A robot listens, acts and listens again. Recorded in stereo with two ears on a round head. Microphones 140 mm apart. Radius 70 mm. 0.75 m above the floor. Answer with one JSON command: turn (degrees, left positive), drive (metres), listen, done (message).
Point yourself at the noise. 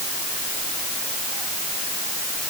{"listen": true}
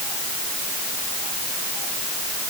{"listen": true}
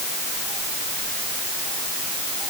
{"done": "I can't make out anything to turn to."}